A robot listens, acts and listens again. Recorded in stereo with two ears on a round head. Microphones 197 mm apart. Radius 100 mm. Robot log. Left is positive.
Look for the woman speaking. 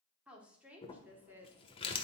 cmd yaw -30
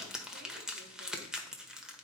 cmd idle
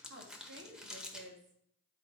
note: So it is at 125° right.
cmd yaw -125
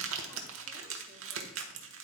cmd idle
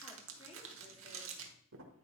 cmd idle
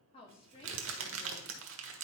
note: The woman speaking is now 25° left.
cmd yaw +25
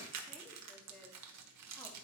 cmd idle
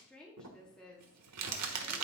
end: Found it: a woman speaking, straight ahead.